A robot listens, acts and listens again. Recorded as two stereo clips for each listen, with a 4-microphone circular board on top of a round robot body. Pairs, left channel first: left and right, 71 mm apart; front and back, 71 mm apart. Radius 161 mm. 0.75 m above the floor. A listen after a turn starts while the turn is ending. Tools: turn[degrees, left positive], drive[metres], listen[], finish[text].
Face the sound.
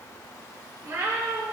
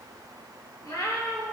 Thought: The cat meowing: 35° right.
Action: turn[-35]
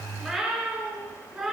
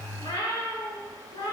Action: finish[Facing the cat meowing, 2 to 4 m away.]